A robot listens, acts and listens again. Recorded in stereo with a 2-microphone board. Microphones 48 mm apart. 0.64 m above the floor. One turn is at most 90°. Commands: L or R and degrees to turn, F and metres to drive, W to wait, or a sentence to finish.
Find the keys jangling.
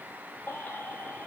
W
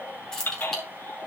L30
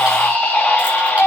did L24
W
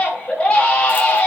W
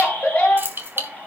R50
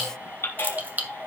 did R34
R40
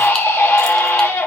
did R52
L15
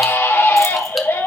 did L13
W
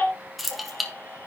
Facing the keys jangling, 1 to 2 m away.